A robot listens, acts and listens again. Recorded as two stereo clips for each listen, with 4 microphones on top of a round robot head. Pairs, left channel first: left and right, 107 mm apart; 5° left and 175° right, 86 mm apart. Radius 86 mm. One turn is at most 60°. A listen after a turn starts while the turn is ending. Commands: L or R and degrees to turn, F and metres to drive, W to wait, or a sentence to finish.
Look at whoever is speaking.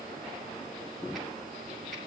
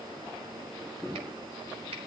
W
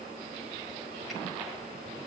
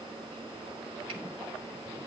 W
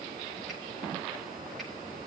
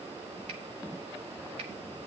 I can't make out anyone speaking to turn to.